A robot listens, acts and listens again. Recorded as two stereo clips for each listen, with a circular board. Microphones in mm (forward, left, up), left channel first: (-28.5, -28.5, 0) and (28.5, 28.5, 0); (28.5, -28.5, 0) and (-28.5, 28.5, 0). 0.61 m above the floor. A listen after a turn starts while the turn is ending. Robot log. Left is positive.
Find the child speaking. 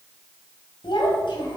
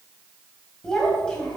note: The child speaking: 125° right.
cmd yaw -125
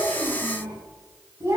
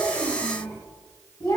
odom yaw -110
note: The child speaking is now 10° right.
cmd yaw -10
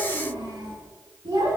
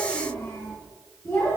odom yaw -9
end: Facing the child speaking.